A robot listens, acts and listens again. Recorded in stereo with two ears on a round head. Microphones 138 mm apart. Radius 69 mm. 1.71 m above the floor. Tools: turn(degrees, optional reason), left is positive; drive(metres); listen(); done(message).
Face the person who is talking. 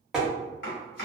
listen()
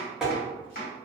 listen()
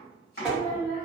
turn(degrees=35, reason="The child speaking: about 35° left or 145° left.")
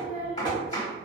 turn(degrees=100, reason="So it is at 100° left.")
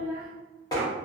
turn(degrees=-20, reason="The child speaking is now 20° right.")
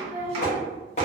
done("Found it: a child speaking, straight ahead.")